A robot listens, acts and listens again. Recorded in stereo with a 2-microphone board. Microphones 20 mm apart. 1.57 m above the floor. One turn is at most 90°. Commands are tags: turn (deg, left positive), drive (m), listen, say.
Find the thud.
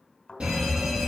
<turn deg="40"/>
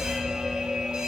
<listen/>
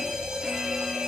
<say>I heard a thud, but can't make it out now. It was about straight ahead or 100° left.</say>